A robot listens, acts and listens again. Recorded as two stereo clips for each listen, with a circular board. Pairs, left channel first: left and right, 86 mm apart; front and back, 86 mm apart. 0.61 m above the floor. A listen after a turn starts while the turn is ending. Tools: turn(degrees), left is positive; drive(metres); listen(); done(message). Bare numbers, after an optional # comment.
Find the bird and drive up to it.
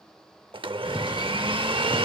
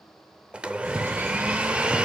# The bird: 120° left.
turn(120)
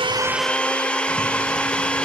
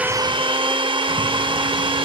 listen()
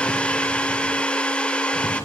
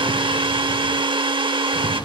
# The bird is now 30° left.
turn(30)
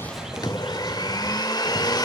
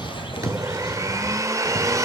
# The bird is now 10° right.
turn(-10)
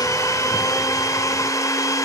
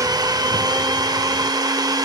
listen()
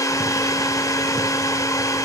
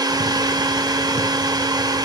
listen()
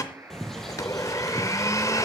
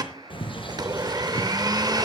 drive(1.0)
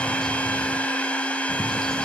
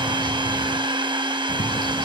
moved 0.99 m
drive(1.0)
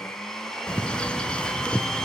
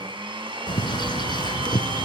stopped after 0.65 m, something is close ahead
# The bird is now 10° left.
turn(10)
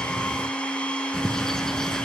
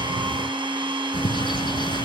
done("I am next to the bird.")